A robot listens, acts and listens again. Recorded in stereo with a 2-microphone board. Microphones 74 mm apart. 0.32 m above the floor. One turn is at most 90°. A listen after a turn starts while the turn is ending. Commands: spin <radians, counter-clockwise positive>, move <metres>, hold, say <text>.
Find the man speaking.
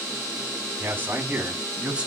spin -0.26
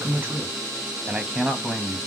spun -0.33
spin 0.52
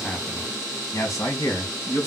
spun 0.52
spin 1.57
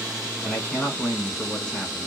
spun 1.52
spin 0.35
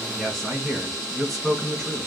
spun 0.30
say Found it: a man speaking, straight ahead.